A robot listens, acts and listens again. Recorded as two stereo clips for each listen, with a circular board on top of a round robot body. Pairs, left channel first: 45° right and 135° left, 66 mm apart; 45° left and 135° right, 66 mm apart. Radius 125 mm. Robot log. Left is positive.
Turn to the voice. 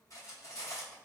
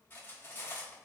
cmd idle
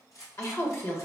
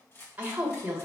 note: The woman speaking: 75° right.
cmd yaw -75
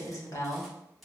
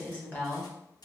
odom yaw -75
note: The woman speaking is now 20° right.
cmd yaw -20
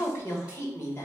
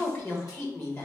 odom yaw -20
end: Found it: a woman speaking, straight ahead, 1 to 2 m away.